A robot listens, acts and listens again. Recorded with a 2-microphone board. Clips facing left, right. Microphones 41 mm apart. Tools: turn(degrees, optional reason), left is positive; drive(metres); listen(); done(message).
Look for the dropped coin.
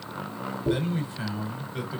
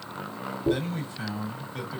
turn(degrees=-15, reason="The dropped coin: about 15° right or 165° right.")
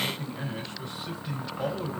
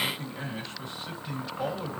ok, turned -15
listen()
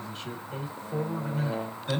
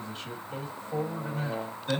done("I heard a dropped coin, but can't make it out now. It was about straight ahead or 150° right.")